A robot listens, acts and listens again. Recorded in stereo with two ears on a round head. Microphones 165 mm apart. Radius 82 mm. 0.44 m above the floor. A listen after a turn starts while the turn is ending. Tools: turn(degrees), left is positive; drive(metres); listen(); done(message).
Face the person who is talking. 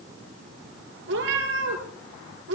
listen()
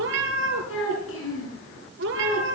turn(degrees=70)
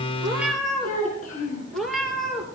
turn(degrees=40)
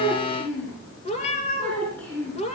done("Found it: a child speaking, straight ahead.")